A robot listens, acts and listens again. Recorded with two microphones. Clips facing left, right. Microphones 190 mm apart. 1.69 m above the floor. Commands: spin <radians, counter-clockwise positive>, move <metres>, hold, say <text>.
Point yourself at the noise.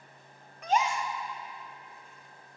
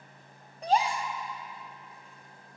spin -0.61
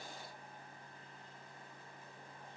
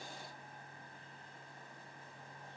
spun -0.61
hold
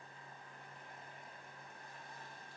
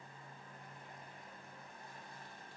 say I heard a gasp, but can't make it out now. It was about straight ahead or 110° right.